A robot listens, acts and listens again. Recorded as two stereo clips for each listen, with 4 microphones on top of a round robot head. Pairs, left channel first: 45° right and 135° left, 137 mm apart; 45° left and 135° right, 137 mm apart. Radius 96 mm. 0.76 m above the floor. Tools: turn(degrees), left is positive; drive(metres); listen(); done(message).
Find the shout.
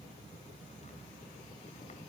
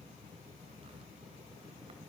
listen()
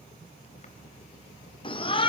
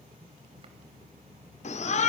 turn(degrees=10)
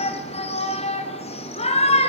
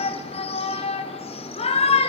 done("Found it: a shout, straight ahead, 2 to 4 m away.")